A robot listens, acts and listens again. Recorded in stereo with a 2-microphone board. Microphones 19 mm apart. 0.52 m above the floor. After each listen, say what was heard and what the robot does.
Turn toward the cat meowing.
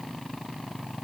Keep listening.
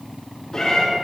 The cat meowing: about 35° left or 145° left. Turn 35° left.
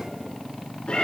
So it is at 110° left. Turn 110° left.
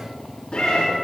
The cat meowing is now 50° left. Turn 50° left.
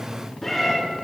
The cat meowing is now 10° left. Turn 10° left.
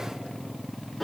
Found it: a cat meowing, straight ahead, 2 to 4 m away.